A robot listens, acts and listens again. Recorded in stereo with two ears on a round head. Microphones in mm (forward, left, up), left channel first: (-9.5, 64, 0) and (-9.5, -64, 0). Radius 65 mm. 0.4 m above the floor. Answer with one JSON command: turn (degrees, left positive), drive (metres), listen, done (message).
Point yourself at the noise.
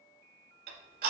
{"turn": -90}
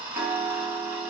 {"turn": -10}
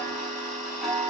{"done": "Found it: ticking, straight ahead, 1 to 2 m away."}